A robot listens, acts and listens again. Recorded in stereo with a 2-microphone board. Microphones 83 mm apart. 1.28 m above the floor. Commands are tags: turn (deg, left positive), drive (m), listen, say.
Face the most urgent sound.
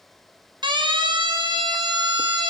<turn deg="-75"/>
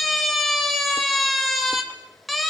<say>Facing the siren, 2 to 4 m away.</say>